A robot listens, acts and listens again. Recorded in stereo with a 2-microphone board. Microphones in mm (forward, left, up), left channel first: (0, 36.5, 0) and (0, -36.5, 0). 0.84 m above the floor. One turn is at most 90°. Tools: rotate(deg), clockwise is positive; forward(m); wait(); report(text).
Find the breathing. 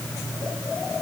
wait()
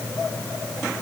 wait()
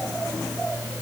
report("I can't make out breathing.")